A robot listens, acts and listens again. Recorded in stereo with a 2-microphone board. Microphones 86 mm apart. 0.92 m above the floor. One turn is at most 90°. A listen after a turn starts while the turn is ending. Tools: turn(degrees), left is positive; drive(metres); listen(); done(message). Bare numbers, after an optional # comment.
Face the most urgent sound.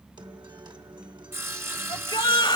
# The shout: about 60° left or 120° left.
turn(60)
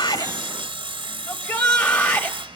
# So it is at 50° left.
turn(50)
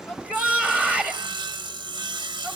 # The shout is now 15° left.
turn(15)
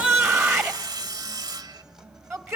done("Facing the shout, 1 to 2 m away.")